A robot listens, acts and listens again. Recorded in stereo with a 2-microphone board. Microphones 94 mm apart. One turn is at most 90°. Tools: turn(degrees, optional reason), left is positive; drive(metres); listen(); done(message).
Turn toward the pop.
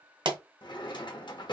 turn(degrees=-65, reason="The pop: about 65° right or 115° right.")
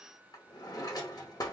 listen()
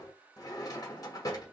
done("I heard a pop, but can't make it out now. It was about straight ahead or 50° right.")